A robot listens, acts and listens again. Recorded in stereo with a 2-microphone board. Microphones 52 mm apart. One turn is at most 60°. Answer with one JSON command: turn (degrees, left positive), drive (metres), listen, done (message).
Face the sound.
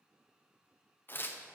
{"turn": 45}
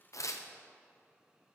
{"turn": 60}
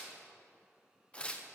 {"turn": 20}
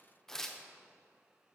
{"turn": 10}
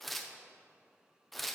{"done": "Facing the tearing paper."}